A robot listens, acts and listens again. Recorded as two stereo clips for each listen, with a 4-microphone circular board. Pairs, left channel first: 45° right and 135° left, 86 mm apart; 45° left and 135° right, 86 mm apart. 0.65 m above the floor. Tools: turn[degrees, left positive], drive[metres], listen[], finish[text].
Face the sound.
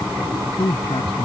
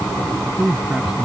Thought: The man speaking: 55° right.
Action: turn[-55]
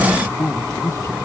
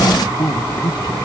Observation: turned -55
Thought: The man speaking is now 10° left.
Action: turn[10]
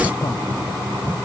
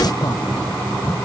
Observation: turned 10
Action: listen[]
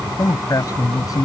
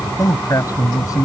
Action: finish[Facing the man speaking.]